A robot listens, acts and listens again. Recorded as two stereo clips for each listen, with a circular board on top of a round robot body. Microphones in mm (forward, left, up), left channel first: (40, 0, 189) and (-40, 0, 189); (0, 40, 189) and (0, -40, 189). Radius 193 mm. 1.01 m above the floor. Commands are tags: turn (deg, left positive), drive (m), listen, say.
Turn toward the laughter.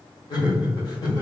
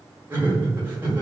<turn deg="-25"/>
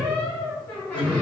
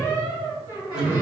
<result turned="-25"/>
<say>Found it: laughter, straight ahead.</say>